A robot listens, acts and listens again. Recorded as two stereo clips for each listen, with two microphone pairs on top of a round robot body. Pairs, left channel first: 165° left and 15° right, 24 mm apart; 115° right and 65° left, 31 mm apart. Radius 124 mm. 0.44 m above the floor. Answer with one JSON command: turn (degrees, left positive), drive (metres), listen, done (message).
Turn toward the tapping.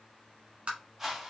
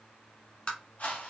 {"turn": -55}
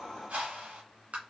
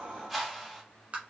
{"turn": 15}
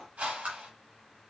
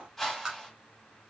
{"done": "Facing the tapping, 1 to 2 m away."}